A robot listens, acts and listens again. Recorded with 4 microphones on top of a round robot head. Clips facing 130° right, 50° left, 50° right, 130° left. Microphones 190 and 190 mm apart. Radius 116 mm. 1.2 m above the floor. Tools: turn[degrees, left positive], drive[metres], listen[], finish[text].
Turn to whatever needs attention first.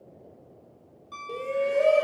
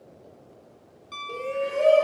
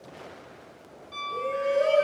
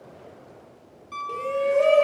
Thought: The shout: 150° left.
Action: turn[150]
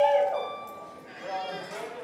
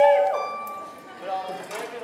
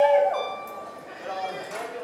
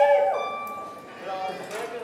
Thought: The shout is now 70° left.
Action: turn[70]
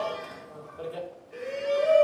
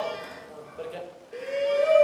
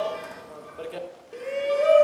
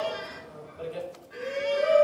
Thought: The shout is now 20° right.
Action: turn[-20]
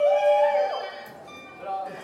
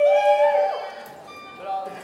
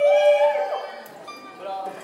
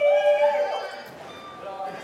Action: finish[Facing the shout.]